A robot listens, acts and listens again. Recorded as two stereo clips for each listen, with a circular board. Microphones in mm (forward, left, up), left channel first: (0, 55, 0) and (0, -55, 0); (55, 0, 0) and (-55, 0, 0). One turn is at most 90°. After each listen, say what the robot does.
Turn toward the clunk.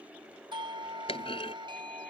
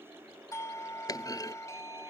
Turn 55° left.
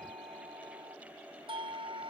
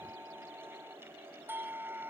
I heard a clunk from this way, but can't make it out now.